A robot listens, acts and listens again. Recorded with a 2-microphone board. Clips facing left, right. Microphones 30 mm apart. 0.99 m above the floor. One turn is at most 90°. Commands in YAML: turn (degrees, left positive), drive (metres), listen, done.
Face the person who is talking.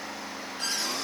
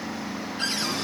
listen: true
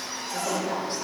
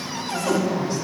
turn: 55
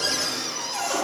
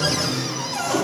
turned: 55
listen: true
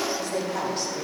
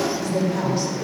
turn: 70
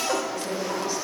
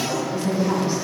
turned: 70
turn: -30
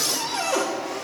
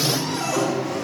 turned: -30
done: "Found it: a woman speaking, straight ahead."